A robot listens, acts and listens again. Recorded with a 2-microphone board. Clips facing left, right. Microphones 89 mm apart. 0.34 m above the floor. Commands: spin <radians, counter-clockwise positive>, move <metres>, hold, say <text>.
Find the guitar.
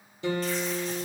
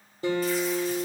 spin -0.70
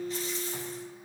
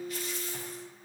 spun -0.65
say Found it: a guitar, straight ahead.